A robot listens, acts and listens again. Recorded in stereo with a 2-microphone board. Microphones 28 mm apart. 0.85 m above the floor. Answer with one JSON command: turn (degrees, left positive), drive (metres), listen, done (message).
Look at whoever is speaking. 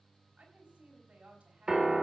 {"turn": -65}
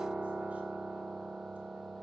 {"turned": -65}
{"listen": true}
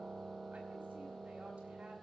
{"listen": true}
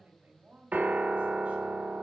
{"turn": -50}
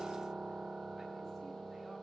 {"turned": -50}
{"listen": true}
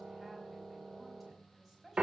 {"done": "Facing the woman speaking, over 4 m away."}